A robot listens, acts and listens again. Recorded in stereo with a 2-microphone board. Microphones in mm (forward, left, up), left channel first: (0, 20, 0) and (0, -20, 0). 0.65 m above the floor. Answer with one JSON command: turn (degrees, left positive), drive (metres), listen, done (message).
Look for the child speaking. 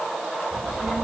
{"turn": 30}
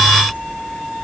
{"turn": 140}
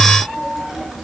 {"turn": -10}
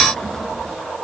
{"done": "Facing the child speaking, over 4 m away."}